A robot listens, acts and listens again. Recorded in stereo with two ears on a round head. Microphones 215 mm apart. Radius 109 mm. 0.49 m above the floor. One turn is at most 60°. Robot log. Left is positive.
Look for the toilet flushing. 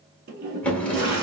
note: The toilet flushing: about 40° right or 140° right.
cmd yaw -40
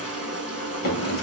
end: Found it: a toilet flushing, straight ahead, 1 to 2 m away.